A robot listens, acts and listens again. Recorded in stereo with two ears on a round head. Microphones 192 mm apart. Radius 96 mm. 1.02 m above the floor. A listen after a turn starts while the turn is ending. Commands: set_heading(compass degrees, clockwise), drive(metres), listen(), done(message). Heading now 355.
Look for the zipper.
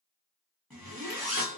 set_heading(325)
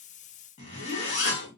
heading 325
set_heading(180)
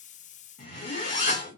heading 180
set_heading(135)
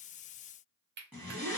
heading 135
done("Found it: a zipper, straight ahead.")